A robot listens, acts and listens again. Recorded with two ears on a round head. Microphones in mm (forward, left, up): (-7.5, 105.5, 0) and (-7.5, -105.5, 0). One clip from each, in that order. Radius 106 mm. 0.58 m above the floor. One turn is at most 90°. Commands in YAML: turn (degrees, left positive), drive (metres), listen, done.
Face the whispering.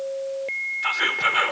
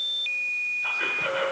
turn: 55
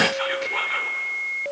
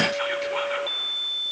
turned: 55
listen: true
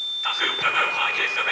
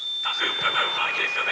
turn: 10
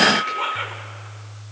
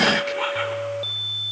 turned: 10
done: "Facing the whispering, 1 to 2 m away."